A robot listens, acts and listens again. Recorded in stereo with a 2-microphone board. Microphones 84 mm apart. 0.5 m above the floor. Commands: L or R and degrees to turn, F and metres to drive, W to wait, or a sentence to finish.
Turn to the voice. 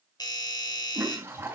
W
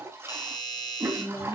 L45
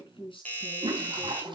L90
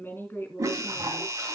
L25
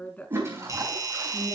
L15
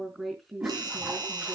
Found it: a woman speaking, straight ahead.